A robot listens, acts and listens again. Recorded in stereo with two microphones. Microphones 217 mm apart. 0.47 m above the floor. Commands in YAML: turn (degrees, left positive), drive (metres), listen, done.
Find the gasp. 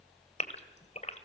turn: 30
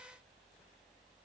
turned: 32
listen: true
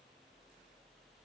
done: "I heard a gasp, but can't make it out now. It was about straight ahead or 120° left."